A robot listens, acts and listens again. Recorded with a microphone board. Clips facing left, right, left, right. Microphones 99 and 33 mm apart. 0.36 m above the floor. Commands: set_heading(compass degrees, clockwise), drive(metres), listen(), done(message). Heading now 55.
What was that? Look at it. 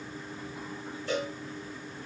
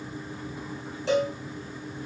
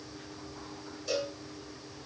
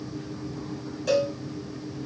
set_heading(145)
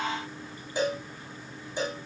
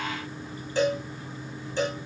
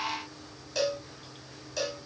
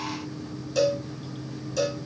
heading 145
set_heading(135)
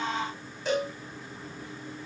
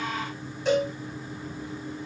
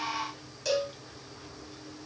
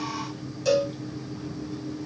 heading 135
done("Facing the cowbell, over 4 m away.")